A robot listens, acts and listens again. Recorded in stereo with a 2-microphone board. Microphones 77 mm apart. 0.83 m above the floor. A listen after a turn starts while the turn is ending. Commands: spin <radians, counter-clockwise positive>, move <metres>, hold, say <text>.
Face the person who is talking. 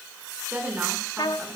spin -0.35
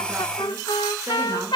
hold
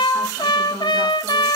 hold
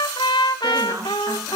spin -2.36
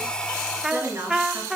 spin -0.61
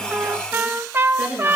spin -0.17
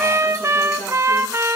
hold
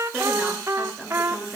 say Facing the woman speaking.